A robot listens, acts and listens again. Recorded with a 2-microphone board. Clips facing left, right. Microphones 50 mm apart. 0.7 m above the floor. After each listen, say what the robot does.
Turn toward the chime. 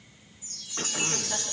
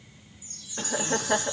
Turn 70° left.
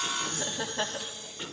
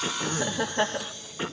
Keep listening.
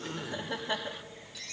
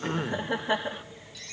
Found it: a chime, straight ahead, 1 to 2 m away.